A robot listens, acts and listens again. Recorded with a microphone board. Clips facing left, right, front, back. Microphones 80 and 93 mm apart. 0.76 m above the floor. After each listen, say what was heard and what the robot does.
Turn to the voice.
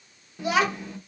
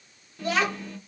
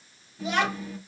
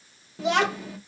The child speaking: 165° left. Turn 165° left.
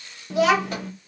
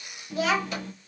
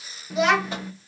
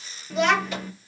The child speaking is now 85° left. Turn 85° left.
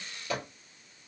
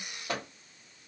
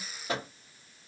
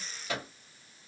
Keep listening.
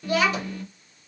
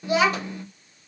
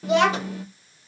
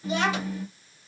The child speaking is now 20° right. Turn 20° right.
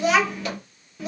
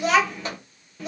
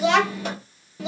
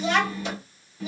Found it: a child speaking, straight ahead, under 1 m away.